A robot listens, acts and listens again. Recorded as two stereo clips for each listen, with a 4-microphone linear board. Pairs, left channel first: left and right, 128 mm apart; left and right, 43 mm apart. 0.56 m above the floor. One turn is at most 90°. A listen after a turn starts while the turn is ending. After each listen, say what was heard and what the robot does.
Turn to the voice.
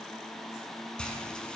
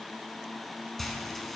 Keep listening.
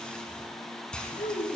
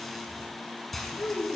The child speaking: about 70° left or 110° left. Turn 70° left.
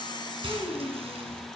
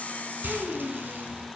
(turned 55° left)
So it is at 15° left. Turn 15° left.
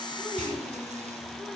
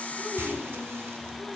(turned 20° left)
Keep listening.
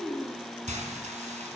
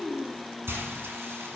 Found it: a child speaking, straight ahead.